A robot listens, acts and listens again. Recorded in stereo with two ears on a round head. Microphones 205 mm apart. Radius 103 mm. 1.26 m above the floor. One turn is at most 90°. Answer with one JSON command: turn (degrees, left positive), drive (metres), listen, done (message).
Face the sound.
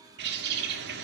{"turn": -50}
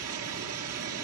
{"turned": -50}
{"turn": -80}
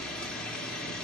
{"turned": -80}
{"done": "Facing the bird."}